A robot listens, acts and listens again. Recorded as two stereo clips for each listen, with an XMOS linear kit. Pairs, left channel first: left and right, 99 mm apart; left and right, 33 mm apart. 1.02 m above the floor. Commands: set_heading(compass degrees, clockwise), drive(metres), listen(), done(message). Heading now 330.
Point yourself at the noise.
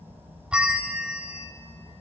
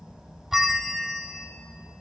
set_heading(0)
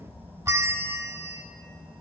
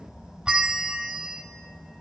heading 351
set_heading(136)
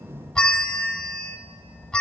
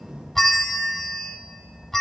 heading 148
set_heading(138)
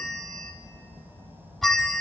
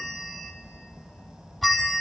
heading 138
done("Found it: a bell, straight ahead.")